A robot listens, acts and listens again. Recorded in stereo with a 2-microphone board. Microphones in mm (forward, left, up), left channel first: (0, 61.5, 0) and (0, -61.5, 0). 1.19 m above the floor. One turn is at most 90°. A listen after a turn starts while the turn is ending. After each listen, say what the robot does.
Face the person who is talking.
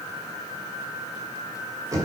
Keep listening.
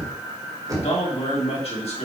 Turn 55° left.
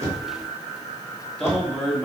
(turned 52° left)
Found it: a man speaking, straight ahead, 2 to 4 m away.